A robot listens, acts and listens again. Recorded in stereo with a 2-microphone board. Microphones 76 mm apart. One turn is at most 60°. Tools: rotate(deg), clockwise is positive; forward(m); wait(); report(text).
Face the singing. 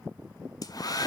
wait()
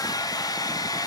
wait()
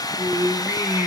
rotate(30)
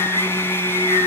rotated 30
rotate(60)
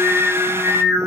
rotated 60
rotate(40)
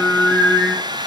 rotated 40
rotate(-15)
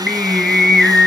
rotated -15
report("Facing the singing.")